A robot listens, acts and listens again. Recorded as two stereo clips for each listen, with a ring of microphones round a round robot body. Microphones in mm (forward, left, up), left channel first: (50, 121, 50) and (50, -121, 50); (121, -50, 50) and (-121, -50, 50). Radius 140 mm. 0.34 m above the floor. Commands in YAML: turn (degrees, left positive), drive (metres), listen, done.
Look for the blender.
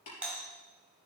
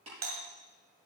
listen: true
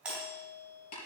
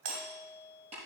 listen: true
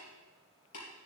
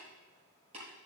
done: "I can't make out a blender, only a doorbell and tapping."